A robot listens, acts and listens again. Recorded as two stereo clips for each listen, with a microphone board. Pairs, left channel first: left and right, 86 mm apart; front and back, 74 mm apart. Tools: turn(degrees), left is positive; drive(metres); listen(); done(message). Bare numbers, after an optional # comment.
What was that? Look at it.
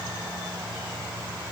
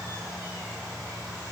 listen()
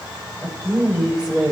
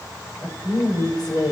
# The woman speaking: 15° right.
turn(-15)
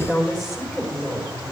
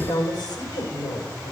done("Facing the woman speaking, over 4 m away.")